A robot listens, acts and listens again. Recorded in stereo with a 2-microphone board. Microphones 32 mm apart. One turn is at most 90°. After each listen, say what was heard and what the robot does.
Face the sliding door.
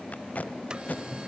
The sliding door: about 25° right or 155° right. Turn 25° right.
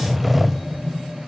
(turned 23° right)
Found it: a sliding door, straight ahead, under 1 m away.